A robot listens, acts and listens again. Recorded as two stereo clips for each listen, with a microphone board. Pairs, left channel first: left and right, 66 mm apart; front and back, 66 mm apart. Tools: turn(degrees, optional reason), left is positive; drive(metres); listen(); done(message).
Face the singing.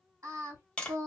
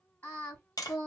turn(degrees=-60, reason="The singing: 60° right.")
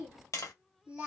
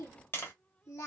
turn(degrees=-20, reason="The singing is now 20° right.")
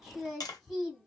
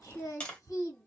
done("Found it: singing, straight ahead.")